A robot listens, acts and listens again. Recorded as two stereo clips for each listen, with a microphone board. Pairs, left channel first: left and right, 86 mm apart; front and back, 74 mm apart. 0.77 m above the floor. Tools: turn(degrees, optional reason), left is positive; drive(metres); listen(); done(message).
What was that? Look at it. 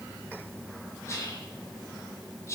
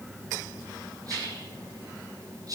turn(degrees=145, reason="The whispering: 145° left.")
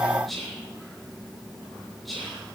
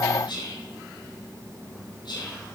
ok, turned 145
done("Found it: whispering, straight ahead.")